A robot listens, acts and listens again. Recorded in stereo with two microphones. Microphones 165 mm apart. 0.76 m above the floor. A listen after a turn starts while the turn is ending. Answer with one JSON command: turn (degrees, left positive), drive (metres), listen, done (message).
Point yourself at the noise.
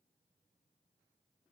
{"listen": true}
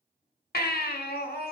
{"turn": 75}
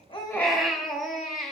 {"done": "Found it: a baby crying, straight ahead, under 1 m away."}